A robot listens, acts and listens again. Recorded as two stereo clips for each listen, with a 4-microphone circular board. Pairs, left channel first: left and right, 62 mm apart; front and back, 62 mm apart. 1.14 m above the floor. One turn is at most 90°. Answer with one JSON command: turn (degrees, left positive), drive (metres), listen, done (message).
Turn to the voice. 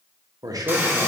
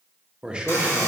{"turn": -90}
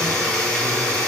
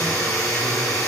{"turn": -15}
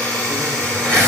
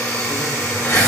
{"listen": true}
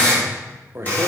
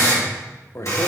{"turn": -40}
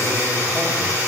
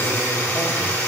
{"listen": true}
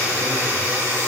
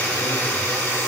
{"listen": true}
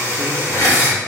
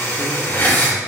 {"done": "Facing where the man speaking came from. I can't hear it now."}